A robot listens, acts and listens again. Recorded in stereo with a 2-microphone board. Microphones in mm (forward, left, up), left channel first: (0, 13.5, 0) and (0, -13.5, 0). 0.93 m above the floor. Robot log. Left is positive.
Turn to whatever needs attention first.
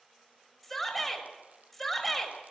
cmd yaw +30
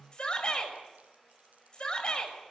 note: So it is at 145° left.
cmd yaw +145
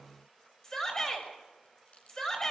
note: The shout is now 20° left.
cmd yaw +20
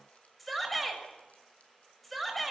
end: Found it: a shout, straight ahead.